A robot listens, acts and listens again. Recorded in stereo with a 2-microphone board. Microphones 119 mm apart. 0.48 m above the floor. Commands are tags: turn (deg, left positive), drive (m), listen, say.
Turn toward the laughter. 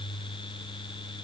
<listen/>
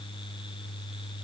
<listen/>
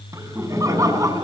<turn deg="-30"/>
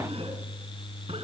<listen/>
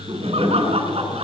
<turn deg="-120"/>
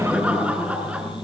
<turn deg="-10"/>
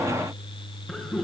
<say>Found it: laughter, straight ahead.</say>